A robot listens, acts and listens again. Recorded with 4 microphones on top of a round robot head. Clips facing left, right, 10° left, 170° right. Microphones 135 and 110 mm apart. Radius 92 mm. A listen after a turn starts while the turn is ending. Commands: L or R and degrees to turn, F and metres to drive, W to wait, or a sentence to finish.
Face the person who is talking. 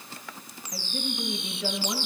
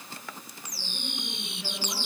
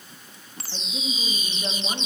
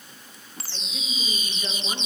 W
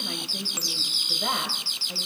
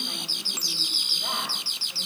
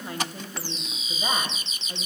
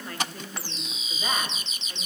W
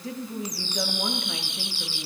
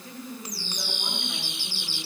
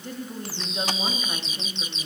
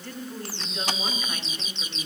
L80
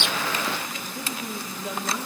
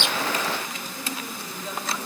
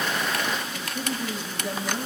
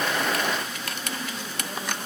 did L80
L10
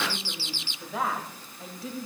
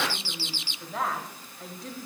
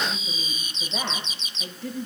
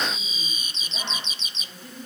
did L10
Found it: a woman speaking, straight ahead, 2 to 4 m away.